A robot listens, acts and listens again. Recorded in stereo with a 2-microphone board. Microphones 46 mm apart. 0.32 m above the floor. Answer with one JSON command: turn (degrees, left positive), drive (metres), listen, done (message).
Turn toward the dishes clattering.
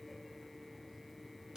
{"listen": true}
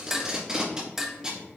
{"turn": -30}
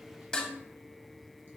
{"turn": 20}
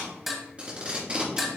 {"done": "Found it: dishes clattering, straight ahead, 1 to 2 m away."}